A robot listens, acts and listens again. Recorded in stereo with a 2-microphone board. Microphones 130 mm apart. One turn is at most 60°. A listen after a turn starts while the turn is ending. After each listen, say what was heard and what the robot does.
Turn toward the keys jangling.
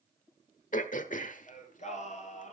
Keep listening.
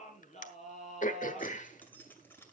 The keys jangling: about 15° left or 165° left. Turn 15° left.
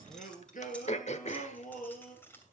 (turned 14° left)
The keys jangling: about 15° left or 165° left. Turn 15° left.
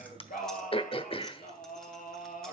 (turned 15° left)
Keep listening.
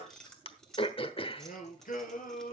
Turn 30° left.
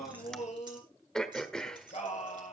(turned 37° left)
Keep listening.
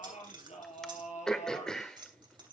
So it is at 35° right. Turn 35° right.
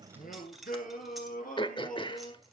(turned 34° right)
Found it: keys jangling, straight ahead, 2 to 4 m away.